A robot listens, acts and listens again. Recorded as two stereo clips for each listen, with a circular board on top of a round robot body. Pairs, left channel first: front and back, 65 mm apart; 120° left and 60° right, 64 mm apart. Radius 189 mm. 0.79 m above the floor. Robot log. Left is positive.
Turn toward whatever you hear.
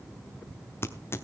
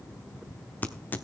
note: The tearing paper: 55° left.
cmd yaw +55
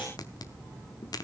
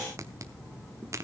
cmd idle
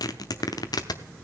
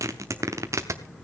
note: The tearing paper is now 20° right.
cmd yaw -20
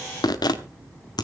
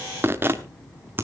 end: Facing the tearing paper, under 1 m away.